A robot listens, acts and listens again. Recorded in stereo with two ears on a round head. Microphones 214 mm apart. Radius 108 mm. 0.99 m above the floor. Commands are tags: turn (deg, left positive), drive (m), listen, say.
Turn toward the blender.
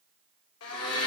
<turn deg="65"/>
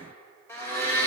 <turn deg="10"/>
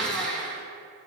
<say>Found it: a blender, straight ahead, 1 to 2 m away.</say>